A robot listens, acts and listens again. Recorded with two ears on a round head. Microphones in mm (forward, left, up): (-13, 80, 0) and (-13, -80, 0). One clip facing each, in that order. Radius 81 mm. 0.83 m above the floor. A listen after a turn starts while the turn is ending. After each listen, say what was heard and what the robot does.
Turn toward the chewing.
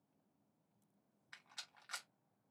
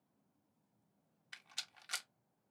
Keep listening.
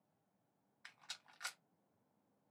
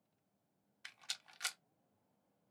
Keep listening.
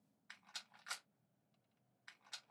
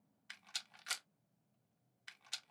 I can't make out chewing to turn to.